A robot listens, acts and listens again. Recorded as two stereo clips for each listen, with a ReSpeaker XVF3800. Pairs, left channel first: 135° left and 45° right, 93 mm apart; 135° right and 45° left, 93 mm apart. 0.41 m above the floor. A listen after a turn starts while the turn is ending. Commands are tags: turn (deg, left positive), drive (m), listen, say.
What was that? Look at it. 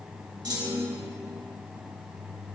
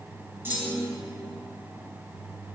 <turn deg="-15"/>
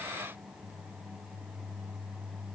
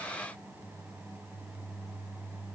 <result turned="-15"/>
<say>Facing where the clunk came from. I can't hear it now.</say>